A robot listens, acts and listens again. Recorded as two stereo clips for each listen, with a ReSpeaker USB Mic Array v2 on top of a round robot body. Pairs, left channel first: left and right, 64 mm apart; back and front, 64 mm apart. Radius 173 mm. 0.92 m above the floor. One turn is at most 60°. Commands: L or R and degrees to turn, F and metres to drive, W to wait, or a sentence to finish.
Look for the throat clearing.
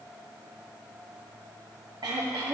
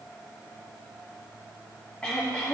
R60
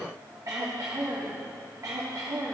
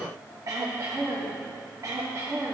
R45
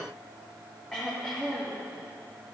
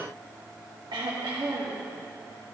Facing the throat clearing, under 1 m away.